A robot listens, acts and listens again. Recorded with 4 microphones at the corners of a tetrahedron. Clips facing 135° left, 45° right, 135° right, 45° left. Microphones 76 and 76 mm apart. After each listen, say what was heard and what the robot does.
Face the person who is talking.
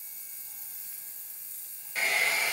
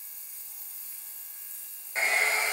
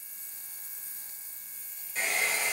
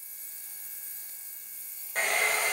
Keep listening.
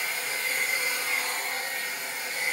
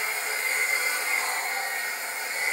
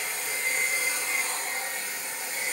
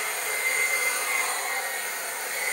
Keep listening.
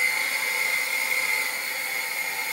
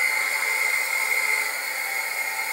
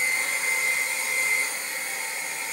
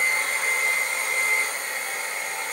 I can't make out anyone speaking, only a hair dryer.